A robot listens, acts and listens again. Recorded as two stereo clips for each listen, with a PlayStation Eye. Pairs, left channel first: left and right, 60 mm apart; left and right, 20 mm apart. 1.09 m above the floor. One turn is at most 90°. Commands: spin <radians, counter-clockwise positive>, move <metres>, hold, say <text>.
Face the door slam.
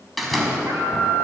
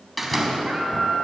spin 0.52
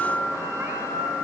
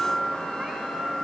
hold
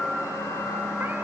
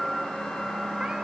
say I heard a door slam, but can't make it out now. It was about 30° right or 150° left.